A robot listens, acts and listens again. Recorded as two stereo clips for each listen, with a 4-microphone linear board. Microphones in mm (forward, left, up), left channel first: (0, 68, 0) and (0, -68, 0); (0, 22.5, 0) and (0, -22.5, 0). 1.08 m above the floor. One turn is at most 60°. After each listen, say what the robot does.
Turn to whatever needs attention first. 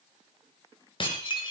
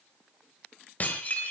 Keep listening.
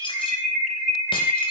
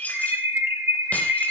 Turn 60° right.
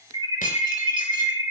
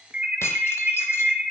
Turn 30° right.
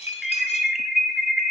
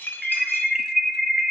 Found it: an alarm, straight ahead.